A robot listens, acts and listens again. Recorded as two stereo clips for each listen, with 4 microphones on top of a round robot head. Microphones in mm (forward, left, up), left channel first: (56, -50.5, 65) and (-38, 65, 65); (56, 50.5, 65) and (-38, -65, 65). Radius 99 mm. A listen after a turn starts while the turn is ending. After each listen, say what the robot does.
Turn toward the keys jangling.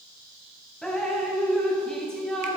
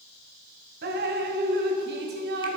Keep listening.
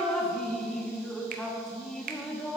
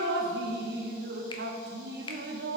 Keep listening.
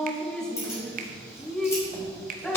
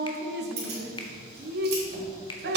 Turn 125° right.
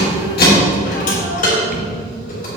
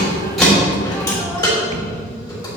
Turn 15° right.
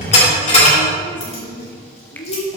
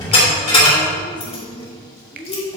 Facing the keys jangling.